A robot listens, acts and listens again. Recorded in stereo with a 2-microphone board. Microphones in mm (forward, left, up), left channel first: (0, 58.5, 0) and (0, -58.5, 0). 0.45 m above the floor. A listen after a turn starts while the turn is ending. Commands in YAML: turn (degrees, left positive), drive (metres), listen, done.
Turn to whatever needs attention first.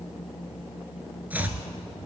listen: true
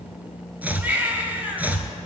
turn: -15
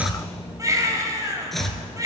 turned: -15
turn: -150
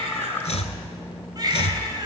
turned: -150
turn: -40
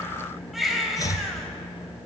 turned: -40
done: "Found it: a baby crying, straight ahead."